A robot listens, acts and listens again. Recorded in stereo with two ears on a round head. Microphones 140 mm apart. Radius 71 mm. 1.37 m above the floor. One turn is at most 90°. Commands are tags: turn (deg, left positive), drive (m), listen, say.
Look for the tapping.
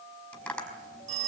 <turn deg="30"/>
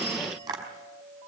<turn deg="-20"/>
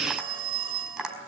<say>Facing the tapping, over 4 m away.</say>